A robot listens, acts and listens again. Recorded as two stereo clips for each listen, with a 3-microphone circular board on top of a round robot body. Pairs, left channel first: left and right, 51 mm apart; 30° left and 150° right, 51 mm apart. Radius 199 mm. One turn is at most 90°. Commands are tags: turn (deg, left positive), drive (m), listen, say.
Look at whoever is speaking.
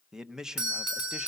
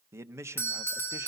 <turn deg="-90"/>
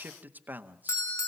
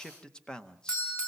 <turn deg="-45"/>
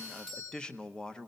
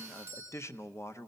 <turn deg="15"/>
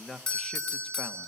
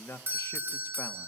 <say>Facing the man speaking, 1 to 2 m away.</say>